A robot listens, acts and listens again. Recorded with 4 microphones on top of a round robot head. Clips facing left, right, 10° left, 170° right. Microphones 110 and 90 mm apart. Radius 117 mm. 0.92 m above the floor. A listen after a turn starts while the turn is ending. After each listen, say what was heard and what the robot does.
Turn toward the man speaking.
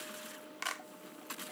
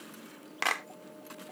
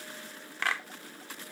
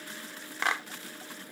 Keep listening.
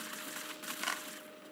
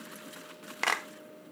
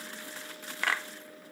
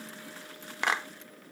Keep listening.
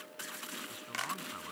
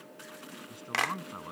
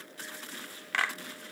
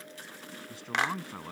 The man speaking: 160° right. Turn 160° right.
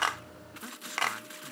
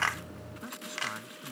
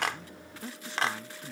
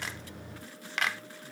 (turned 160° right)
Found it: a man speaking, straight ahead.